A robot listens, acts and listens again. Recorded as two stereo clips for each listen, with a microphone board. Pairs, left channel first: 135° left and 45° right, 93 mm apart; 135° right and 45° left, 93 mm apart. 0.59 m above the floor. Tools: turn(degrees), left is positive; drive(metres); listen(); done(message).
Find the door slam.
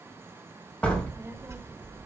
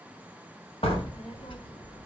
turn(degrees=-150)
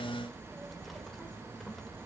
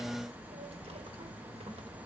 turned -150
done("I heard a door slam from this way, but can't make it out now.")